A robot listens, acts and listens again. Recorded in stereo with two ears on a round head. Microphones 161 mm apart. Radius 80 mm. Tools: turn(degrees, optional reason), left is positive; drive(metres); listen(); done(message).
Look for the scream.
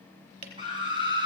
turn(degrees=-25, reason="The scream: about 25° right or 155° right.")
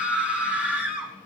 turn(degrees=-10, reason="So it is at 10° right.")
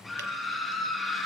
done("Facing the scream, 2 to 4 m away.")